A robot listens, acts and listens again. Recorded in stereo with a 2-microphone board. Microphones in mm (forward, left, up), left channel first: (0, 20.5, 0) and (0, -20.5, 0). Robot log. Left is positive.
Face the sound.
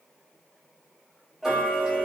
cmd yaw -30
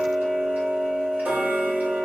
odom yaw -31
note: So it is at 135° right.
cmd yaw -135
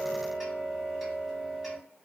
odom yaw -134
end: Found it: ticking, straight ahead, under 1 m away.